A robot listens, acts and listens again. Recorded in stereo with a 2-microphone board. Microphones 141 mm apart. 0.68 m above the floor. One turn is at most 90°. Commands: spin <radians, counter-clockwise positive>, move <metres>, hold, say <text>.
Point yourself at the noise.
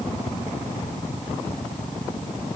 hold
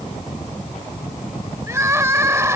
spin -0.35
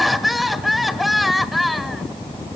say Facing the crying, 1 to 2 m away.